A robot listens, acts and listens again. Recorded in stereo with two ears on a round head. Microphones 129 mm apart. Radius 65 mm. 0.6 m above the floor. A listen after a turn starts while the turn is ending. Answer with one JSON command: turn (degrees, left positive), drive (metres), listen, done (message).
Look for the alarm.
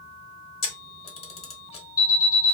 {"turn": 25}
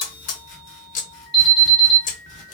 {"turn": 10}
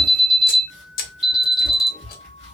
{"done": "Facing the alarm."}